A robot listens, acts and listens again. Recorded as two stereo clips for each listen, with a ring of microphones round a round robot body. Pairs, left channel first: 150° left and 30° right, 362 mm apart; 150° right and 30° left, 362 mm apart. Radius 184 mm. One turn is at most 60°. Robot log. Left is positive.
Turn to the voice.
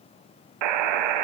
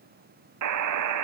cmd idle
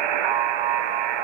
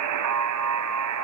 cmd idle
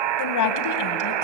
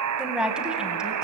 note: The woman speaking: 120° left.
cmd yaw +60
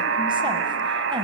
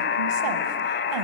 note: Nothing new. It was at 60° left.
cmd yaw +60
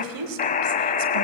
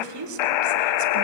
end: Found it: a woman speaking, straight ahead, 1 to 2 m away.